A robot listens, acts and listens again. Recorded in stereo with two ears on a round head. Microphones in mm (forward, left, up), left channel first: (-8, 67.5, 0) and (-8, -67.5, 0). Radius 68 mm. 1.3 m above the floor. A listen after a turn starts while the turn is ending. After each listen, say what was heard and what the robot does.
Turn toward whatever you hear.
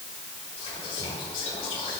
The whispering: about 40° left or 140° left. Turn 40° left.
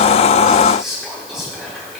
Facing the whispering.